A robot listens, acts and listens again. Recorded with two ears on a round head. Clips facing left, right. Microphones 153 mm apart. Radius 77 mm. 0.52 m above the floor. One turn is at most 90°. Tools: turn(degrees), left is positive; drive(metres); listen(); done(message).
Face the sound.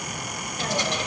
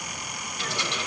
turn(degrees=35)
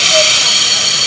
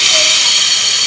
turn(degrees=90)
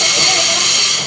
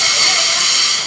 turn(degrees=20)
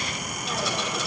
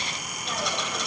done("Found it: a hiss, straight ahead, 1 to 2 m away.")